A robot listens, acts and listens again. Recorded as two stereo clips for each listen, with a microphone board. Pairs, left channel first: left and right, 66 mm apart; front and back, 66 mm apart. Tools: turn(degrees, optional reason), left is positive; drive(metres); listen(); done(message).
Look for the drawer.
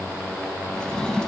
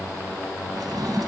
turn(degrees=170, reason="The drawer: 170° left.")
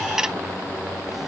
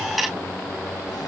listen()
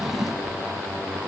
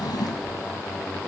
done("Found it: a drawer, straight ahead.")